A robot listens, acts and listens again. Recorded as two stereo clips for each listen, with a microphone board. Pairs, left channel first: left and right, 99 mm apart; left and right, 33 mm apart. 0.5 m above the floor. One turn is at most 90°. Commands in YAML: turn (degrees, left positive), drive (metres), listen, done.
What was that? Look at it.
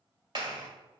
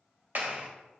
turn: -50
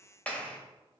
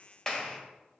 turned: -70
turn: 15
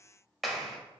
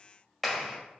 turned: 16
done: "Facing the clap, 1 to 2 m away."